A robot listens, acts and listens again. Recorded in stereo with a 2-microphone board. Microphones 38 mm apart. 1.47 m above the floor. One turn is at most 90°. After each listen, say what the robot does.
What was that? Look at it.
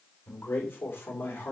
Turn 75° left.
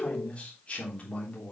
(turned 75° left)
Turn 40° left.
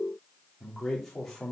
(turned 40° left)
Turn 10° left.
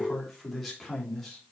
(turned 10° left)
Found it: a man speaking, straight ahead.